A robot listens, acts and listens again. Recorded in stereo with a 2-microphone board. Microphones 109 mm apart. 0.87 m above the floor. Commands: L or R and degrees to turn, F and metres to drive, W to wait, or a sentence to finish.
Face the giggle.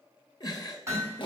L35
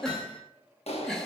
Facing the giggle, 1 to 2 m away.